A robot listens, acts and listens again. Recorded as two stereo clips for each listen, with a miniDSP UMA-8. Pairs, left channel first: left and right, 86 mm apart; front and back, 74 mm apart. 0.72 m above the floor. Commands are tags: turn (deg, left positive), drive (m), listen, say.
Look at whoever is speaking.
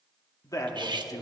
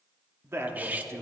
<turn deg="130"/>
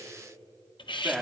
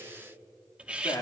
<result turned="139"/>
<turn deg="-10"/>
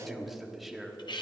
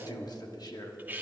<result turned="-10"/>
<say>Facing the man speaking, 1 to 2 m away.</say>